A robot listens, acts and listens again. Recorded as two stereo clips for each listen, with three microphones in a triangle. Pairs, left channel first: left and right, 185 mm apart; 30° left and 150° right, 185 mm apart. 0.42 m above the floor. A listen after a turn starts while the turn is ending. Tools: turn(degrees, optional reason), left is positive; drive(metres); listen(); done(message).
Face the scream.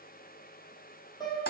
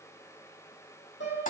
listen()
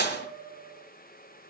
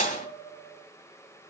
listen()
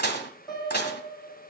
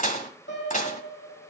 done("I can't make out a scream to turn to.")